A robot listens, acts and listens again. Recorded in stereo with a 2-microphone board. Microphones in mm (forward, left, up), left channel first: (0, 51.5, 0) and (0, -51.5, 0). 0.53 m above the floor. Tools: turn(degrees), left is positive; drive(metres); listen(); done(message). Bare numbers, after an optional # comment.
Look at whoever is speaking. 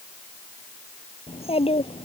# The child speaking: about 75° left or 105° left.
turn(75)
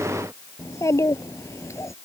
# So it is at 30° left.
turn(30)
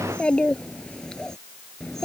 done("Facing the child speaking.")